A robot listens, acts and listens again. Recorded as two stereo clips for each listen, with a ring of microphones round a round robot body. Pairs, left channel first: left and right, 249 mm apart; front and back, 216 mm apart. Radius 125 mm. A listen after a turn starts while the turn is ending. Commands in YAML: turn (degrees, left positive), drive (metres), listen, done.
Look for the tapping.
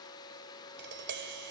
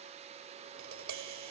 turn: -140
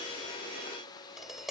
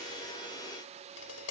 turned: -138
done: "Facing the tapping."